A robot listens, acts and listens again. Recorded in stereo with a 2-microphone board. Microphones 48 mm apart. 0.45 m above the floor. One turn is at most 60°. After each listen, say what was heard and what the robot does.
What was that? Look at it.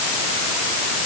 Keep listening.
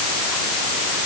Keep listening.
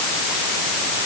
I can't make out anything to turn to.